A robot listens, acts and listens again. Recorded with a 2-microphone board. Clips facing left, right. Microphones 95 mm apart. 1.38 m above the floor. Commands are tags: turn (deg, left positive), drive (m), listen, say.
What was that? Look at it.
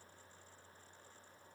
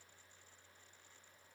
<listen/>
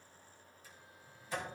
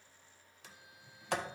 <turn deg="-75"/>
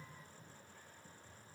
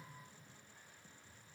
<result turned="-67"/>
<listen/>
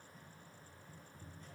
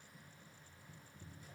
<turn deg="-10"/>
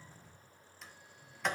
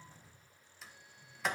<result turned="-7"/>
<say>Facing the sliding door.</say>